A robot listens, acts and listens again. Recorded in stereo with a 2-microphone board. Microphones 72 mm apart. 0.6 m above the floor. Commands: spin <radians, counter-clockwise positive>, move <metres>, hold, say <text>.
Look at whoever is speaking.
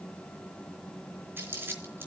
hold
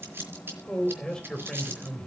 spin 0.52
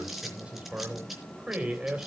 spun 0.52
spin -0.35
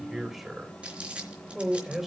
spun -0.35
say Facing the man speaking, 2 to 4 m away.